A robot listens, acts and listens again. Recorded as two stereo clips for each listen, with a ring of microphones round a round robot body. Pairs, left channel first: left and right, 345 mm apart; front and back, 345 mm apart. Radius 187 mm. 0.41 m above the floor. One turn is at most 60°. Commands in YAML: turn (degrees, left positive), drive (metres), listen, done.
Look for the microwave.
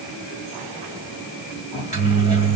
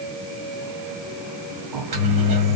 turn: -60
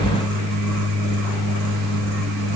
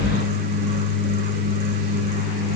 turn: -60
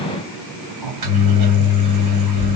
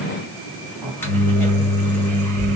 turn: -60
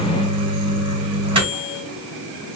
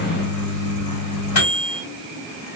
turn: -15
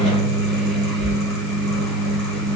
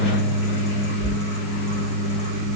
done: "Found it: a microwave, straight ahead, 2 to 4 m away."